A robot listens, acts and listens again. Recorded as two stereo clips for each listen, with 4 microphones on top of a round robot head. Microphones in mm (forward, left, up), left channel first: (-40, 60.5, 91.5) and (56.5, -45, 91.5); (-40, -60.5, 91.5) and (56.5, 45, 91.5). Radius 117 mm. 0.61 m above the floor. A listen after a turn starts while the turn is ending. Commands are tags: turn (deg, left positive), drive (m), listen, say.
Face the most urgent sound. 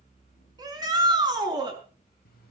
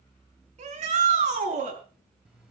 <turn deg="15"/>
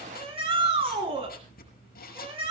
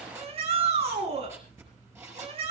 <say>Found it: a shout, straight ahead.</say>